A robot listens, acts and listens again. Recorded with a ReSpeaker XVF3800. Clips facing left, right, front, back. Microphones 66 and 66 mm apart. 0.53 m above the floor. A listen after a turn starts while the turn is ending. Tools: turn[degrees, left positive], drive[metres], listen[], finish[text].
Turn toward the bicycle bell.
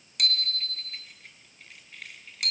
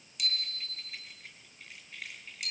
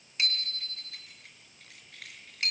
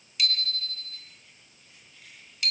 Thought: The bicycle bell: 60° left.
Action: turn[60]
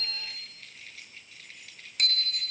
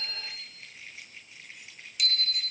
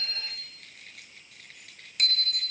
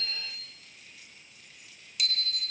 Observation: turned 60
Thought: The bicycle bell is now 45° left.
Action: turn[45]
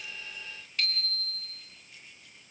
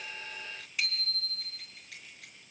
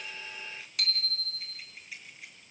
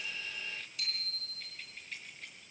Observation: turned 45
Thought: The bicycle bell is now 15° right.
Action: turn[-15]
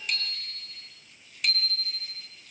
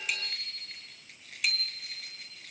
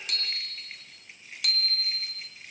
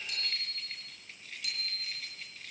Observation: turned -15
Action: finish[Facing the bicycle bell.]